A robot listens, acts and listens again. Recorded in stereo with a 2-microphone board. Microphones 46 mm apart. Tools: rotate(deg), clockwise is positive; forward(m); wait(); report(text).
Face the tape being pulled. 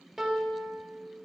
wait()
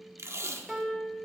rotate(90)
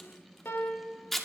report("Found it: tape being pulled, straight ahead.")